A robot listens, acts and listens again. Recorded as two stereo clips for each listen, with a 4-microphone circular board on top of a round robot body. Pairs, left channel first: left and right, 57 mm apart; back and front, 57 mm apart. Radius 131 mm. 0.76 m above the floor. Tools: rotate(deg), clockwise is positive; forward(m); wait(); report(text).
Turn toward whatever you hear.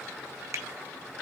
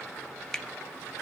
rotate(100)
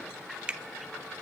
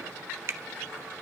rotate(25)
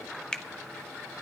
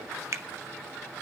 rotate(-15)
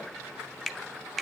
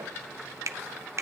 report("Found it: a finger snap, straight ahead.")